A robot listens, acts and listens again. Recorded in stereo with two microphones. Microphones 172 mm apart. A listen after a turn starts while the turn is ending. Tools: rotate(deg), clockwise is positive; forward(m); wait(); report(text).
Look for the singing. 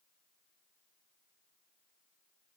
wait()
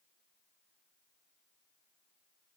wait()
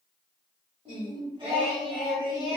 rotate(20)
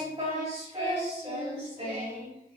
rotate(35)
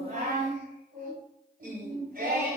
rotate(120)
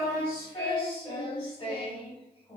rotate(-25)
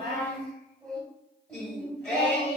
report("Facing the singing.")